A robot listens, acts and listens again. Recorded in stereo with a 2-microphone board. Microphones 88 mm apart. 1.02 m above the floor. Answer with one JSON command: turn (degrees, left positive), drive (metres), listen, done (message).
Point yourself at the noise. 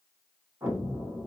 {"turn": -35}
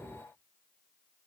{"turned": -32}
{"done": "Facing the explosion, 1 to 2 m away."}